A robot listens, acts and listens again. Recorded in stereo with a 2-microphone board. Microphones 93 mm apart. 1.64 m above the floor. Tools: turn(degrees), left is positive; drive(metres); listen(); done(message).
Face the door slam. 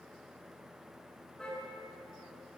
listen()
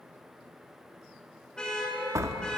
turn(degrees=-35)
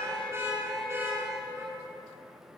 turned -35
listen()
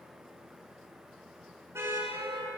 done("I heard a door slam, but can't make it out now. It was about straight ahead or 110° right.")